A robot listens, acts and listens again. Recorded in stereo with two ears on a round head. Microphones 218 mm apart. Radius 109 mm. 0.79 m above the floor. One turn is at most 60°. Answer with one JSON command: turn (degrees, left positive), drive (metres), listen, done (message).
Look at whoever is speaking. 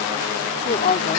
{"turn": 35}
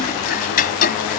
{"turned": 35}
{"listen": true}
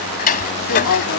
{"turn": 60}
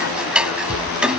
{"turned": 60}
{"turn": 45}
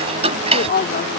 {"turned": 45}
{"turn": 45}
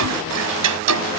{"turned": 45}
{"listen": true}
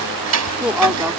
{"done": "Facing the woman speaking."}